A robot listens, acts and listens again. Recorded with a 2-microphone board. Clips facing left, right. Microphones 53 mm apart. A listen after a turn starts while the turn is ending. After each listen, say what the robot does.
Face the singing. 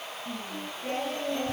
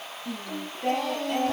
Turn 70° right.
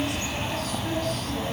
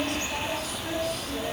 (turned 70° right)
Keep listening.
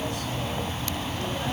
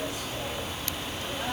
Keep listening.
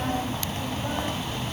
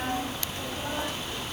I heard singing, but can't make it out now. It was about straight ahead or 40° right.